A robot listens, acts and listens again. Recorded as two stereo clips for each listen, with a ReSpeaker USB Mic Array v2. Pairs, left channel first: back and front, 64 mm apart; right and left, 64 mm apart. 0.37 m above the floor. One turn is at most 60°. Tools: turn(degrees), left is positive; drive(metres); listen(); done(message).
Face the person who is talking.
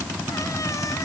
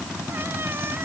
listen()
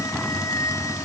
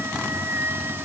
listen()
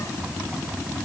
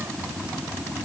done("I can't make out anyone speaking to turn to.")